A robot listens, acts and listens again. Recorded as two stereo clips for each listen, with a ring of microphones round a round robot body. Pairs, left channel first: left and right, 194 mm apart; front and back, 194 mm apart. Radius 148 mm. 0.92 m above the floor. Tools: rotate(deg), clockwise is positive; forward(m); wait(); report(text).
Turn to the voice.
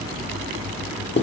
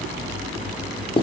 wait()
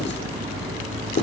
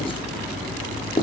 wait()
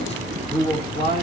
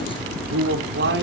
rotate(-160)
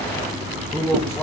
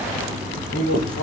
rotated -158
rotate(-10)
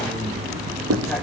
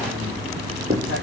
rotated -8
wait()
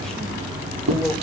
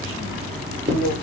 report("Facing the man speaking.")